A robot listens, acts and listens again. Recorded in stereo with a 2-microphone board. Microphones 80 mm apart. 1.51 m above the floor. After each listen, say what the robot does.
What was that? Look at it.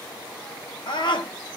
Turn 70° left.
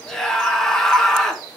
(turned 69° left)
Found it: a scream, straight ahead, 1 to 2 m away.